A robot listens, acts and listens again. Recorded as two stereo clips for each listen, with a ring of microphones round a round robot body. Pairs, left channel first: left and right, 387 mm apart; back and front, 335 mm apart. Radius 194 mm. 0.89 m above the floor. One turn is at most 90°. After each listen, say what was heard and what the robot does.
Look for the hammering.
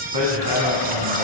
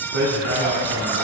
The hammering: 55° right. Turn 55° right.
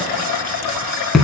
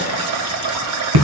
Found it: hammering, straight ahead, 2 to 4 m away.